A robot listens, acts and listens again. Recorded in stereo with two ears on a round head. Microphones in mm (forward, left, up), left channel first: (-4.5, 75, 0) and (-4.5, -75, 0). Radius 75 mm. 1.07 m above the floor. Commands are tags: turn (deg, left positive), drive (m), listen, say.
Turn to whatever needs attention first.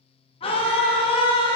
<turn deg="35"/>
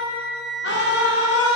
<turn deg="105"/>
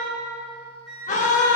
<turn deg="45"/>
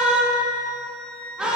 <say>Facing the scream, 1 to 2 m away.</say>